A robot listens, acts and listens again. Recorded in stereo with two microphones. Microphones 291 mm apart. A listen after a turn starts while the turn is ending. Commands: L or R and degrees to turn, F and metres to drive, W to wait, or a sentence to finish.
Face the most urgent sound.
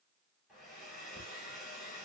W
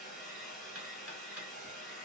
W
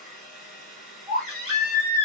R30
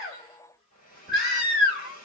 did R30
Facing the baby crying, 2 to 4 m away.